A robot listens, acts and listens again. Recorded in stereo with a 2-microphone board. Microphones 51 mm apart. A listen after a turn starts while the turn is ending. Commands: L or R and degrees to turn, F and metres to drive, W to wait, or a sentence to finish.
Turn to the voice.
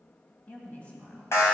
L30
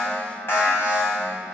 W
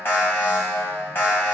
W
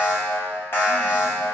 I heard a woman speaking, but can't make it out now. It was about straight ahead or 120° left.